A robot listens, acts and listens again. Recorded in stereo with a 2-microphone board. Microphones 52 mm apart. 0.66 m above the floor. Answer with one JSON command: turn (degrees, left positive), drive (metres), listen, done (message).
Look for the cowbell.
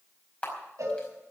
{"turn": -90}
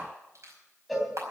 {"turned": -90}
{"done": "Facing the cowbell, 2 to 4 m away."}